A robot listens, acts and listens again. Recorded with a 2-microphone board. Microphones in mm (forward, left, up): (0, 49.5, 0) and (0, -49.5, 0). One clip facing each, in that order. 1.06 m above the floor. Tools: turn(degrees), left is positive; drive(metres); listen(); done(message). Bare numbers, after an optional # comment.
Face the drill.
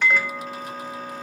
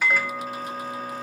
listen()
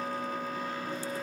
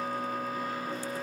listen()
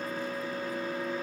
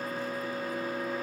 done("I can't make out a drill to turn to.")